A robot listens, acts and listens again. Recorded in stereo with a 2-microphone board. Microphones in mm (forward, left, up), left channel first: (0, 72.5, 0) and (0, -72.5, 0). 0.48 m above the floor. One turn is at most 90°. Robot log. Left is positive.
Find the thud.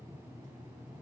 cmd idle
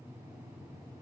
cmd idle
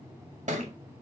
note: The thud: about 60° right or 120° right.
cmd yaw -60
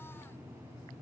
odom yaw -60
cmd idle
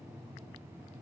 end: I heard a thud, but can't make it out now. It was about straight ahead or 60° right.